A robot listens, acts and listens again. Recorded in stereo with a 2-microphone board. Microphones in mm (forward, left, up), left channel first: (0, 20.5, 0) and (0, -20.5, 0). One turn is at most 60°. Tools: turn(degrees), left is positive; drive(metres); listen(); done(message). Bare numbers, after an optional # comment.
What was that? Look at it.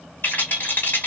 # The rattle: about 50° left or 130° left.
turn(50)
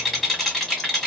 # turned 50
done("Found it: a rattle, straight ahead, 1 to 2 m away.")